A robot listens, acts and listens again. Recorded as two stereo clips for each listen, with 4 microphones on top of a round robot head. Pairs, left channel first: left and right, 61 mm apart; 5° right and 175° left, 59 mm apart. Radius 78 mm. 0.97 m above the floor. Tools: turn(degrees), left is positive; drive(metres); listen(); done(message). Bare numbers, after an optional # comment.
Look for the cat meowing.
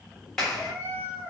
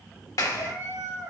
# The cat meowing: 150° right.
turn(-150)
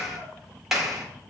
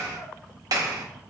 listen()
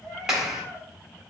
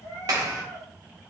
# The cat meowing is now 30° left.
turn(30)
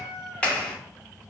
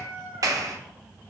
# The cat meowing is now 10° left.
turn(10)
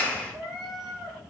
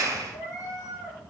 done("Facing the cat meowing, 2 to 4 m away.")